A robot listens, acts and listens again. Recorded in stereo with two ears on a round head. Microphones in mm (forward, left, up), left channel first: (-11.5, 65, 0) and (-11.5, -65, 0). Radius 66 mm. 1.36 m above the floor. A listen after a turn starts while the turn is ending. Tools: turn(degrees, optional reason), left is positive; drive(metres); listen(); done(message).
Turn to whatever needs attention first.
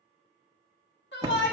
turn(degrees=90)
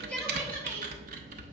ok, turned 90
listen()
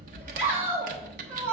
turn(degrees=-15, reason="The shout is now 15° right.")
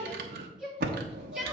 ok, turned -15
done("Facing the shout.")